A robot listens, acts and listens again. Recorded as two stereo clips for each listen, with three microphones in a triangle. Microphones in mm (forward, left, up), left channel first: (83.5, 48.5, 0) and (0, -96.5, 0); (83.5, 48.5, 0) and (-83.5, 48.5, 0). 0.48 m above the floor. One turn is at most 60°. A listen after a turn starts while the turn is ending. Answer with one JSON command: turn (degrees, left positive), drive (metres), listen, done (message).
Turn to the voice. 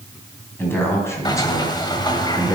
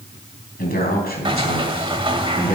{"done": "Found it: a man speaking, straight ahead, 2 to 4 m away."}